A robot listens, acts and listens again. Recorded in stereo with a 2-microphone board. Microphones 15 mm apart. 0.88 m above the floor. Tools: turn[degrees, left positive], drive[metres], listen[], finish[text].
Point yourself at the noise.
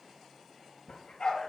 Thought: The dog barking: about 55° left or 125° left.
Action: turn[55]
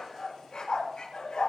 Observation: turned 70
Thought: So it is at 65° left.
Action: turn[65]
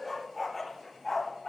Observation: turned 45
Thought: The dog barking is now 25° left.
Action: turn[25]
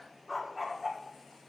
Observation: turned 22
Action: finish[Found it: a dog barking, straight ahead.]